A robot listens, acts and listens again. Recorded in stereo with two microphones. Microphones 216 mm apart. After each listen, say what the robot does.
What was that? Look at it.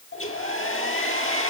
Turn 90° left.
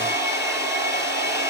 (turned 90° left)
Turn 15° right.
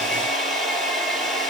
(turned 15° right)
Facing the hair dryer.